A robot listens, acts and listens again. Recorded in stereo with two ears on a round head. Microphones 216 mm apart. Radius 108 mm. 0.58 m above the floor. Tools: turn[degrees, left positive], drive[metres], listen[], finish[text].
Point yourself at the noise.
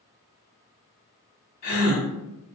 Thought: The gasp: about 40° left or 140° left.
Action: turn[40]
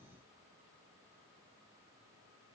Action: listen[]
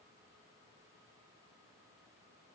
Action: finish[I heard a gasp, but can't make it out now. It was about straight ahead or 100° left.]